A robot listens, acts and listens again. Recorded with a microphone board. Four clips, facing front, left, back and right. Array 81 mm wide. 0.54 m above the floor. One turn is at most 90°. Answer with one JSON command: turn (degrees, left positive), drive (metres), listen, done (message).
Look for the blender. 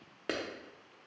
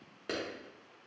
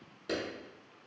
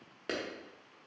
{"listen": true}
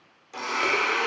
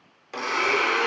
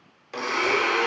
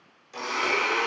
{"turn": 90}
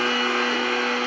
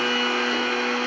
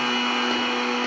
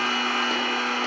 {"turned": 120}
{"done": "Found it: a blender, straight ahead."}